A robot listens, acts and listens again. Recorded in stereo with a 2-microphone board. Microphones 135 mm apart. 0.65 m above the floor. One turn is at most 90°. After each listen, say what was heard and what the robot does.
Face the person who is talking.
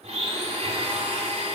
Keep listening.
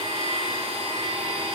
Keep listening.
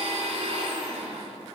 I can't make out anyone speaking to turn to.